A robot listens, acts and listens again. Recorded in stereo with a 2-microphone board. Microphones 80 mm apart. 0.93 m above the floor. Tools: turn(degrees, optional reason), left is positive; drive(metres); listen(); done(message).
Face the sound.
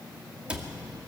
turn(degrees=-30)
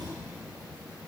turn(degrees=-135, reason="So it is at 135° right.")
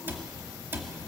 turn(degrees=-30, reason="The cupboard door is now 30° right.")
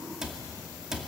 turn(degrees=-10, reason="The cupboard door is now 10° right.")
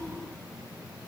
listen()
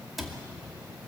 done("Facing the cupboard door.")